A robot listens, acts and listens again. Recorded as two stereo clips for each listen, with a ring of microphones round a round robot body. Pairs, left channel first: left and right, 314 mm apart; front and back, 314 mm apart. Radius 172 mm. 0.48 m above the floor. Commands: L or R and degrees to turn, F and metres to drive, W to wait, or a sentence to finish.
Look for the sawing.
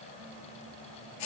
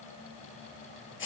W
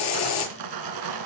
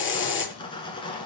R75
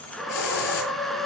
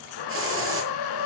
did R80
Facing the sawing.